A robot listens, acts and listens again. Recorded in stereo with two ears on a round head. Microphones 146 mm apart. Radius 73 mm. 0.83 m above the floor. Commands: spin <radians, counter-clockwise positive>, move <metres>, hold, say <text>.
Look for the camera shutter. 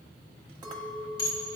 hold
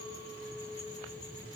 hold
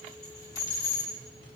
say I can't make out a camera shutter, only a clink and dishes clattering.